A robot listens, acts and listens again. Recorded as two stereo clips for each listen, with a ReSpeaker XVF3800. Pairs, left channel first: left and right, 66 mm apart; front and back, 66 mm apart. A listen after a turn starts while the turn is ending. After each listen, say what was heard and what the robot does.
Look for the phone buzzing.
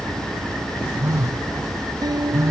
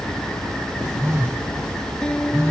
The phone buzzing: 130° right. Turn 130° right.
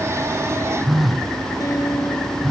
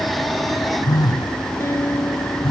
Facing the phone buzzing.